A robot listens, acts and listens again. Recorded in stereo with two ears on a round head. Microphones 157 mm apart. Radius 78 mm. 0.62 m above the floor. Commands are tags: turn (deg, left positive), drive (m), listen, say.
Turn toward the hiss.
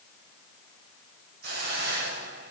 <turn deg="-60"/>
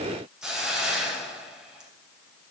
<say>Found it: a hiss, straight ahead, 2 to 4 m away.</say>